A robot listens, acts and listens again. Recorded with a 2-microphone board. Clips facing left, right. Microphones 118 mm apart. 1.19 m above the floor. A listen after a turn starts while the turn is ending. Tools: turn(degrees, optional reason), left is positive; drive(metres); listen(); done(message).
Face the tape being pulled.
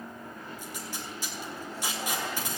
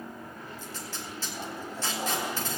turn(degrees=30)
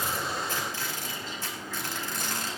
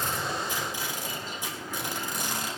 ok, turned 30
turn(degrees=-15, reason="So it is at 15° right.")
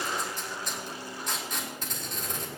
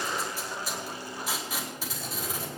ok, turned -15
done("Facing the tape being pulled, 2 to 4 m away.")